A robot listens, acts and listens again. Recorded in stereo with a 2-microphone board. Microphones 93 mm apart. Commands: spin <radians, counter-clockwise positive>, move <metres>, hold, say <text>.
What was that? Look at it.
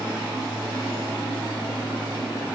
hold
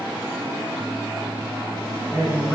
spin 0.52
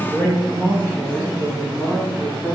spin -0.17
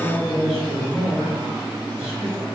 say Found it: a man speaking, straight ahead, over 4 m away.